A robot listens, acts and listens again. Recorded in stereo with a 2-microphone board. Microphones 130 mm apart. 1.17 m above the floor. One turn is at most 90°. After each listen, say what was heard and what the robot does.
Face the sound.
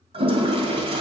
The toilet flushing: about 45° right or 135° right. Turn 45° right.
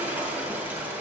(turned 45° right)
So it is at 15° right. Turn 15° right.
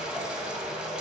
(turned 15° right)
The toilet flushing is now 10° right. Turn 10° right.
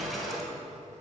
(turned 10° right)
Facing the toilet flushing.